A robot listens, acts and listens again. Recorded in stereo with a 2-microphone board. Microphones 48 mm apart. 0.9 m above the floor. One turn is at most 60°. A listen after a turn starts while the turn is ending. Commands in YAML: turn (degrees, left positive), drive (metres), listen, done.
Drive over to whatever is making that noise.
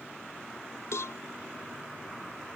turn: 60
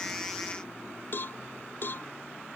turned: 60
turn: 50
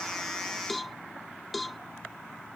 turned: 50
drive: 1.0
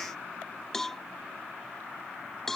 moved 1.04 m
drive: 1.0
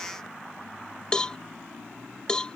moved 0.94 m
turn: 15
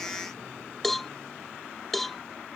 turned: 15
drive: 1.0
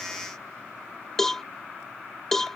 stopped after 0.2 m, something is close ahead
turn: 10
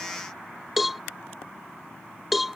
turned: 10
done: "Arrived at the cowbell, straight ahead."